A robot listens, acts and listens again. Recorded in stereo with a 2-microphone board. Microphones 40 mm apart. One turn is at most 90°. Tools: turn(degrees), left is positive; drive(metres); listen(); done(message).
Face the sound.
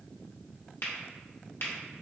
turn(degrees=65)
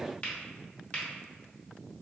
turn(degrees=35)
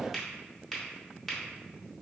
done("Facing the finger snap.")